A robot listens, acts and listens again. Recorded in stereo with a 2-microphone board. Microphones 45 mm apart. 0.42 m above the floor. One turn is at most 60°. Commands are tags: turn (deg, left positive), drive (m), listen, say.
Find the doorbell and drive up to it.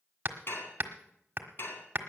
<listen/>
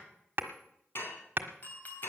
<turn deg="40"/>
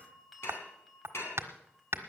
<drive m="1.0"/>
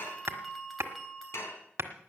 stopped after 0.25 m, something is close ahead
<say>Something is in my way. I am facing the doorbell but have not reached it.</say>